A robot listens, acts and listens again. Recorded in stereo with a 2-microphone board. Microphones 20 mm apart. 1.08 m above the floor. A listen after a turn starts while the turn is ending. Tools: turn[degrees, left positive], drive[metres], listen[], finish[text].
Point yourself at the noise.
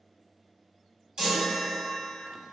Thought: The chime: about 50° right or 130° right.
Action: turn[-50]
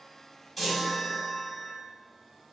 Action: finish[Facing the chime, 1 to 2 m away.]